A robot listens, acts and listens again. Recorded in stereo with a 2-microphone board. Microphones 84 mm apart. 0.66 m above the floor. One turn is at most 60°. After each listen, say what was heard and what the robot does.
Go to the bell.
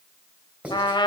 Keep listening.
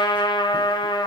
Keep listening.
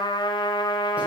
I can't make out a bell to turn to.